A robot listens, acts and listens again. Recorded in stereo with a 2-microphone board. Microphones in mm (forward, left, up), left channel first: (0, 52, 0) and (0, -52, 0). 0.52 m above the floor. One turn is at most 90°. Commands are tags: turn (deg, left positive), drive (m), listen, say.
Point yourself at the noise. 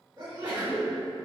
<turn deg="-40"/>
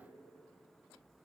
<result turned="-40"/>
<listen/>
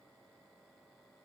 <say>I heard a sneeze, but can't make it out now. It was about straight ahead or 100° right.</say>